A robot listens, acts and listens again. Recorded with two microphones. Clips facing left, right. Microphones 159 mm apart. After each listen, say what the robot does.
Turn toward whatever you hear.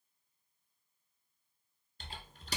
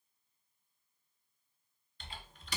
Turn 40° left.
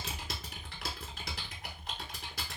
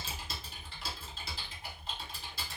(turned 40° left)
Turn 100° left.
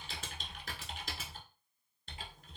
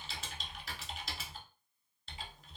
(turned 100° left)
Turn 55° left.
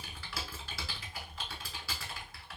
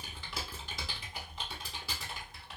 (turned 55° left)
Turn 20° right.
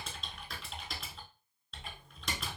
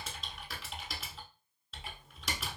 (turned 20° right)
Facing the typing on a keyboard, under 1 m away.